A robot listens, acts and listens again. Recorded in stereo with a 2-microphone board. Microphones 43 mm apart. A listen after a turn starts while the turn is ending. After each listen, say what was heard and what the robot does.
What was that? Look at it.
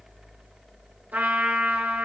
The trumpet: about 45° right or 135° right. Turn 45° right.
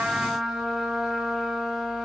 Facing the trumpet.